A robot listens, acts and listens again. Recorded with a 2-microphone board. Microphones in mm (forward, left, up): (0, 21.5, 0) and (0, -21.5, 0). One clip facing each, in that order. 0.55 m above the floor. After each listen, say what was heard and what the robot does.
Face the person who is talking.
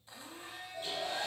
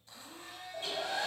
Keep listening.
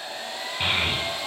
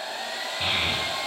The child speaking: about 55° left or 125° left. Turn 55° left.
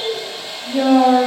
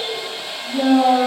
So it is at 65° left. Turn 65° left.
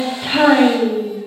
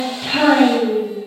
The child speaking is now 20° left. Turn 20° left.
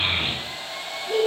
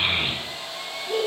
Found it: a child speaking, straight ahead, 1 to 2 m away.